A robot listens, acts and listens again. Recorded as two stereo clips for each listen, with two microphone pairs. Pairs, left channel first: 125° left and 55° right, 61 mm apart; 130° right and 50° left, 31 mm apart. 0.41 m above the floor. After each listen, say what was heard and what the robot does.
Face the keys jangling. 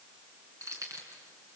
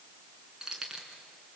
The keys jangling: 20° right. Turn 20° right.
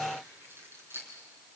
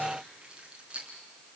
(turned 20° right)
Found it: keys jangling, straight ahead, over 4 m away.